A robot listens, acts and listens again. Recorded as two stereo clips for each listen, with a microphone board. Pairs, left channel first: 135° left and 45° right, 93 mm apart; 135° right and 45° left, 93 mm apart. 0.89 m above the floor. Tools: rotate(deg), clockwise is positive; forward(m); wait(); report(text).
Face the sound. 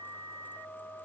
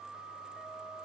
wait()
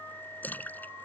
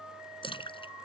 rotate(155)
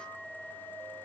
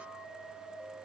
report("Facing where the splash came from. I can't hear it now.")